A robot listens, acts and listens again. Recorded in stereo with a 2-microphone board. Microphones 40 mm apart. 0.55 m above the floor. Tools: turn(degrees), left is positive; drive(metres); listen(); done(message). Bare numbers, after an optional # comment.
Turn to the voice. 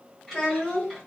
turn(30)
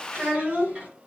# So it is at 15° right.
turn(-15)
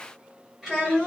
done("Facing the child speaking, 1 to 2 m away.")